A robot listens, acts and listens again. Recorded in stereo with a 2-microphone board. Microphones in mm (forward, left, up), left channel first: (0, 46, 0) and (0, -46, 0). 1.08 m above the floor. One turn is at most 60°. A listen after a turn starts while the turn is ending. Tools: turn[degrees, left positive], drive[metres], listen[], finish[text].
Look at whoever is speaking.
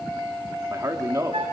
Thought: The man speaking: about 35° right or 145° right.
Action: turn[-35]
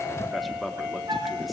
Action: listen[]
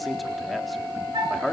Action: finish[Found it: a man speaking, straight ahead.]